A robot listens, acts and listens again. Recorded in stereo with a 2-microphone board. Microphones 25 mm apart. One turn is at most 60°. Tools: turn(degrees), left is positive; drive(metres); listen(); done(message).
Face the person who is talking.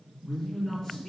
turn(degrees=20)
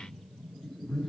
turn(degrees=60)
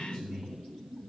turn(degrees=55)
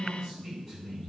done("Facing the man speaking.")